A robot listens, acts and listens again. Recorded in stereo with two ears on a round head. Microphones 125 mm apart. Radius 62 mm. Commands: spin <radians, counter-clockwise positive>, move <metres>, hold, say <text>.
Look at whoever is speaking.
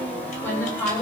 spin 0.26
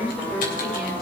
say Facing the woman speaking.